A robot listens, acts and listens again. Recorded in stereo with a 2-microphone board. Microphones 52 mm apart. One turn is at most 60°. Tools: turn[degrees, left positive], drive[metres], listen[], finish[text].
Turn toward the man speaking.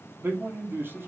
Thought: The man speaking: about 45° right or 135° right.
Action: turn[-45]
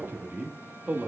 Thought: So it is at 25° right.
Action: turn[-25]
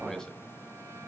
Action: listen[]
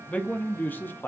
Thought: The man speaking is now 40° left.
Action: turn[40]
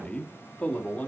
Thought: The man speaking is now 25° left.
Action: turn[25]
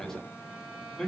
Action: finish[Found it: a man speaking, straight ahead, 2 to 4 m away.]